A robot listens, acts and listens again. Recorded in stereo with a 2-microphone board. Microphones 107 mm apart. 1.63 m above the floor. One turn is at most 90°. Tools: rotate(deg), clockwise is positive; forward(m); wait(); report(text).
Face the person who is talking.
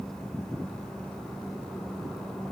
wait()
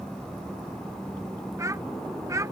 rotate(30)
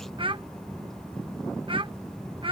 rotate(90)
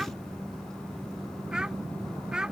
rotate(10)
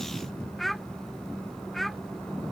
report("Facing the child speaking.")